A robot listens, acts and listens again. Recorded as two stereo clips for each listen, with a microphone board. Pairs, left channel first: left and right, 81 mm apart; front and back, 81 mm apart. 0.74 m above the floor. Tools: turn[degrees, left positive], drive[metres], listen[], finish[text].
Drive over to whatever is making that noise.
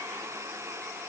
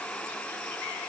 Action: listen[]
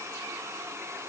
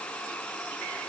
Action: listen[]
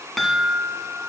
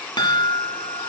Action: drive[1.0]
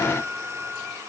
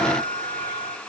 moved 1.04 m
Thought: The chime is now 10° left.
Action: turn[10]
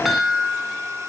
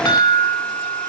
Action: drive[1.0]
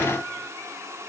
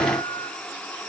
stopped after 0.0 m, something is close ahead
Action: listen[]
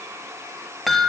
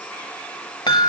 Action: finish[Arrived at the chime, straight ahead.]